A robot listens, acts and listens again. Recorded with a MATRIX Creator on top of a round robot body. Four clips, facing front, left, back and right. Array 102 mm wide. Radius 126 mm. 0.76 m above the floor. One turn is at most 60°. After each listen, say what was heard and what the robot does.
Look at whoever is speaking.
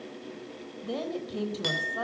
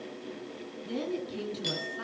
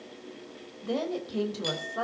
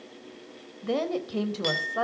The woman speaking: 100° right. Turn 60° right.
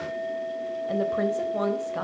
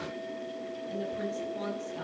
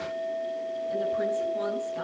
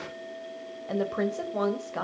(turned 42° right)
The woman speaking is now 55° right. Turn 55° right.
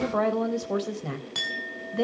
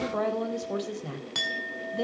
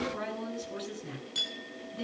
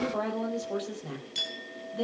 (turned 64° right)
Facing the woman speaking.